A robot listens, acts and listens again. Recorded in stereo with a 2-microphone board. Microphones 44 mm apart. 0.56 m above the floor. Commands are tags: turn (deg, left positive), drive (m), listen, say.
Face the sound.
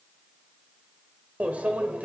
<turn deg="-30"/>
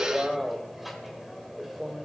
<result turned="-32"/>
<say>Found it: a microwave, straight ahead.</say>